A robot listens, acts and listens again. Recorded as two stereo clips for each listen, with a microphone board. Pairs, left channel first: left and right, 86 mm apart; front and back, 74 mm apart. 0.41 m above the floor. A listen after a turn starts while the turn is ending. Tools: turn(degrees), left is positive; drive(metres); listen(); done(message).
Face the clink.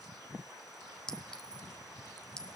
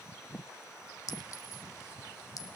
turn(degrees=10)
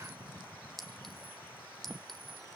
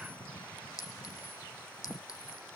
done("Facing the clink.")